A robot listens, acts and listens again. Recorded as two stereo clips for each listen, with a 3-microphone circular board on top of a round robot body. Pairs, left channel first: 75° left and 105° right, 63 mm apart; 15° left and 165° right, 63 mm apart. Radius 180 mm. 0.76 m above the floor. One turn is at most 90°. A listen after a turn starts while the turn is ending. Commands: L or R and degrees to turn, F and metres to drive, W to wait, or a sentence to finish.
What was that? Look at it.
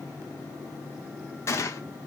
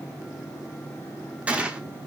L90
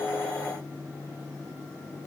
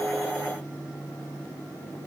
L35
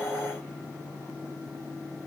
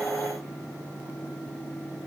I heard a gunshot from this way, but can't make it out now.